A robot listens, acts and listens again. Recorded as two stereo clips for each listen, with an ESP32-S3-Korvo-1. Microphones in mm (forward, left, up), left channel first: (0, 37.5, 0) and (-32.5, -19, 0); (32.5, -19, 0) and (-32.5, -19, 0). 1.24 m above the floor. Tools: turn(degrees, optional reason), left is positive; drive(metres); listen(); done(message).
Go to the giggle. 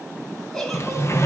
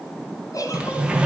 turn(degrees=-25, reason="The giggle: 25° right.")
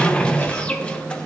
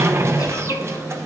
listen()
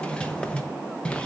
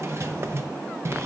listen()
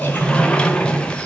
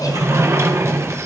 done("Facing where the giggle came from. I can't hear it now. I did not reach it.")